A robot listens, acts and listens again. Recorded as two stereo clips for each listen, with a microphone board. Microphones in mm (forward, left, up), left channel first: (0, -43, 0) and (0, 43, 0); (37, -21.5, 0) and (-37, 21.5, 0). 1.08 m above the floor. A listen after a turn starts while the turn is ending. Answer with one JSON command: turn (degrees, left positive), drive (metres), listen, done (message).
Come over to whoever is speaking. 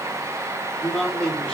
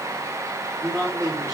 {"turn": -170}
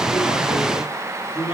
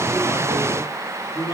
{"turn": -65}
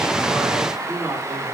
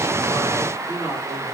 {"turn": 15}
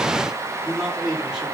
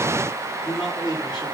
{"drive": 1.0}
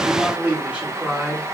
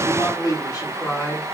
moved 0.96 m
{"turn": 15}
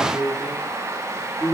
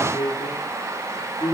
{"drive": 1.0}
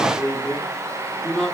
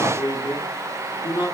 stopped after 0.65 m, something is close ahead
{"turn": -10}
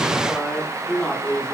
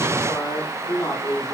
{"done": "I am next to the man speaking."}